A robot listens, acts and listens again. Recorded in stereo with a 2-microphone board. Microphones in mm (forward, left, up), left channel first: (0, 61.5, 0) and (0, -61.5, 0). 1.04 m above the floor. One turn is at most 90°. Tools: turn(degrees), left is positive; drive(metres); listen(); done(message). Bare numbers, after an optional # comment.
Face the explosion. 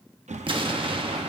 # The explosion: about 45° right or 135° right.
turn(-45)
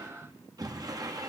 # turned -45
listen()
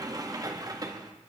done("I heard an explosion, but can't make it out now. It was about straight ahead or 90° right.")